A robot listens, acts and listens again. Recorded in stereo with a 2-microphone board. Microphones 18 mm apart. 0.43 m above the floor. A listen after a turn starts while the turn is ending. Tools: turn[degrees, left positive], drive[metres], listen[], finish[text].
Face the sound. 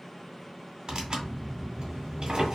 Thought: The tearing paper: about 50° right or 130° right.
Action: turn[-50]
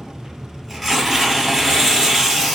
Action: finish[Found it: tearing paper, straight ahead, 1 to 2 m away.]